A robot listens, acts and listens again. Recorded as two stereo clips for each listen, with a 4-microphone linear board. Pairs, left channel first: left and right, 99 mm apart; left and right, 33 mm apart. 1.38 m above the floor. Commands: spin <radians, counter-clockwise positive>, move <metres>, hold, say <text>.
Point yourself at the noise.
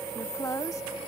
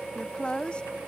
spin 0.61
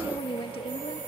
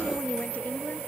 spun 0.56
spin 1.92
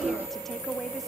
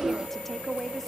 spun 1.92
say Facing the woman speaking.